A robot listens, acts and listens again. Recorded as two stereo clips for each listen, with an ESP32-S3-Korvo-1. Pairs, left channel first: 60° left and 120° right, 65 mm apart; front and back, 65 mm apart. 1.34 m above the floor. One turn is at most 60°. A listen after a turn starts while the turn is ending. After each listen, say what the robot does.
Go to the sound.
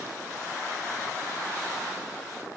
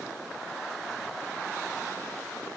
Keep listening.
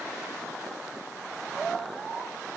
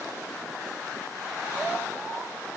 Keep listening.
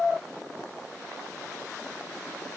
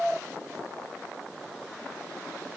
I can't make out anything to turn to.